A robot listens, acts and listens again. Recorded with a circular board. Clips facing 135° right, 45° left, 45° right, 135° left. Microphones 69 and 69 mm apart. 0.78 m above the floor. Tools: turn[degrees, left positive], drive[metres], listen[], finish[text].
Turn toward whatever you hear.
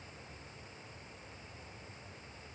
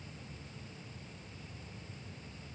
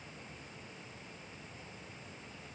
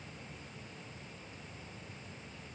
Action: listen[]
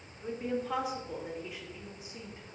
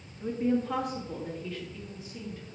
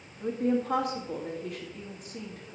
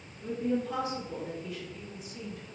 Thought: The woman speaking: 70° right.
Action: turn[-70]
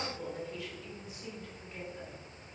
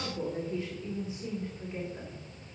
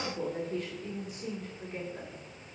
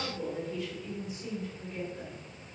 Thought: The woman speaking is now 15° right.
Action: turn[-15]
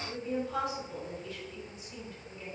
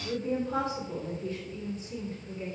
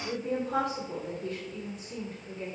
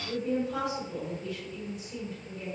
Action: finish[Found it: a woman speaking, straight ahead, 2 to 4 m away.]